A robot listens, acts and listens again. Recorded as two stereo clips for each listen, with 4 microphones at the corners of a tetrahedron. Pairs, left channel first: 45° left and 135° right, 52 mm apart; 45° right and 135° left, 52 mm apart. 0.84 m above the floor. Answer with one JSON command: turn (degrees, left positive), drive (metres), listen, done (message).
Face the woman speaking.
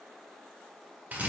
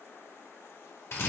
{"listen": true}
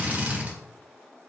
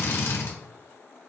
{"listen": true}
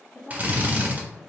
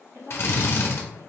{"turn": 130}
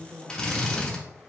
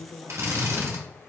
{"turn": -55}
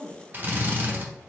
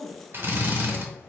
{"done": "Facing the woman speaking, 2 to 4 m away."}